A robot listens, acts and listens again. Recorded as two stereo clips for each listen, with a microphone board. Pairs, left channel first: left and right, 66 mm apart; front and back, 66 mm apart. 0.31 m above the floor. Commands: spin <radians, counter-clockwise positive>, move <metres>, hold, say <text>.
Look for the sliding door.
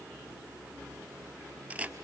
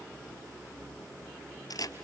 hold
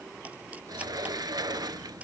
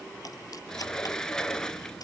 spin -1.40
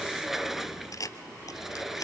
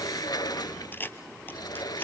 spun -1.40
say Facing the sliding door, under 1 m away.